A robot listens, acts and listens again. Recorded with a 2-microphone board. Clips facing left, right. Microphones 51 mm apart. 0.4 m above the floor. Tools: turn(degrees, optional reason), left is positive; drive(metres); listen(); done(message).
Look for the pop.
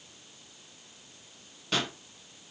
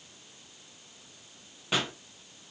turn(degrees=-30)
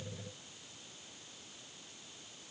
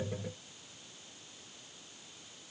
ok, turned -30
listen()
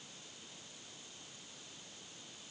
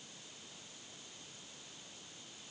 done("I heard a pop, but can't make it out now. It was about 15° left or 135° right.")